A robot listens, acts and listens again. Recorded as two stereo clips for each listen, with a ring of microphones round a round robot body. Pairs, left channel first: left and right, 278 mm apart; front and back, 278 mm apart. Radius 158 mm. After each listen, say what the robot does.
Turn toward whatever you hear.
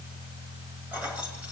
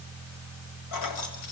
Found it: keys jangling, straight ahead.